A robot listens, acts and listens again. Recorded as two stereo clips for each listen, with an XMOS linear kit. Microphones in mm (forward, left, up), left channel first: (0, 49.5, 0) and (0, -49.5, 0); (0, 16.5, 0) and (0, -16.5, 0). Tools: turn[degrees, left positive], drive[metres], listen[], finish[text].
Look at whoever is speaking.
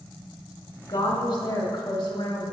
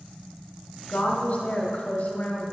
Thought: The woman speaking: about 60° left or 120° left.
Action: turn[60]
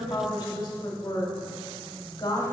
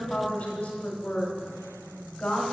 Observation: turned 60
Thought: So it is at 50° left.
Action: turn[50]
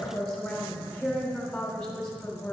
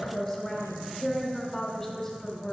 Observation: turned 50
Action: finish[Found it: a woman speaking, straight ahead.]